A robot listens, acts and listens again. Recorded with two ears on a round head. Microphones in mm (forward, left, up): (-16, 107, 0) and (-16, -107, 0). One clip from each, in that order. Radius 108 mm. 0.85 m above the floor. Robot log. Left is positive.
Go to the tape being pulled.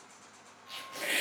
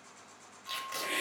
note: The tape being pulled: about 60° right or 120° right.
cmd yaw -60
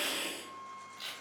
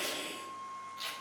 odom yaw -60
note: So it is at 10° right.
cmd yaw -10
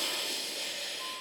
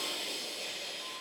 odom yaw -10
cmd idle
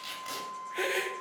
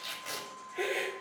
cmd fwd 1.0
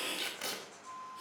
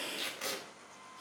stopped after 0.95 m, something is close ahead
end: Arrived at the tape being pulled, straight ahead.